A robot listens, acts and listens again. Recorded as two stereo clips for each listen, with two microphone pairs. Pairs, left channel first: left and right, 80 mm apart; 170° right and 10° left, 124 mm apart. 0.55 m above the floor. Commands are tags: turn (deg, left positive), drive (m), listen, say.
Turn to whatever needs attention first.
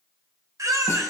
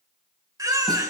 <turn deg="-50"/>
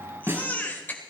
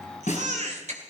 <turn deg="25"/>
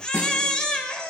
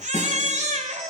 <turn deg="10"/>
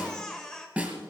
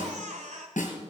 <say>Facing the baby crying, 1 to 2 m away.</say>